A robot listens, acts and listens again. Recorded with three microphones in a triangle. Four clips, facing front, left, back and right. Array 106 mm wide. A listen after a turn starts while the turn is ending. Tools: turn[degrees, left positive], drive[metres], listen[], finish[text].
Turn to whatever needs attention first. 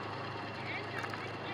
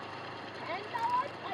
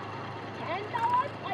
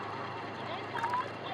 Thought: The shout: 165° left.
Action: turn[165]
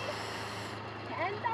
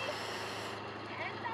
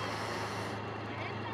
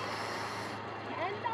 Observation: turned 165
Thought: The shout is now 30° right.
Action: turn[-30]
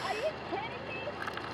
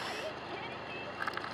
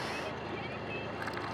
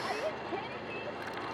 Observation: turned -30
Thought: The shout is now 25° right.
Action: turn[-25]
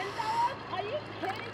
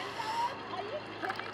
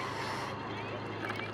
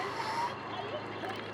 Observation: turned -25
Thought: The shout is now 10° left.
Action: turn[10]
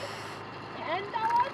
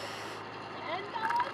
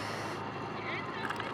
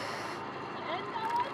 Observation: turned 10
Action: finish[Found it: a shout, straight ahead.]